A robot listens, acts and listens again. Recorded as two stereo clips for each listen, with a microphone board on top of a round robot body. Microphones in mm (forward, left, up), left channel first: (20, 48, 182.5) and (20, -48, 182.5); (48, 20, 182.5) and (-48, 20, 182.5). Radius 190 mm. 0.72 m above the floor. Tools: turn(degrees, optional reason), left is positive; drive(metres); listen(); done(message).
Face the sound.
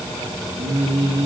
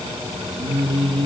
turn(degrees=-145, reason="The singing: 145° right.")
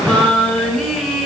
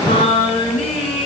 done("Facing the singing.")